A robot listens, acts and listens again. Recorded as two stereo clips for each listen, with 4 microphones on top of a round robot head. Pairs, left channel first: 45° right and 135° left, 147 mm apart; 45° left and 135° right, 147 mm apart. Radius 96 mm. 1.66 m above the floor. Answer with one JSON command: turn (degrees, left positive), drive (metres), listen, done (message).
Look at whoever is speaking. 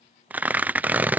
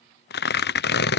{"listen": true}
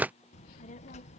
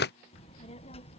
{"done": "Facing the child speaking."}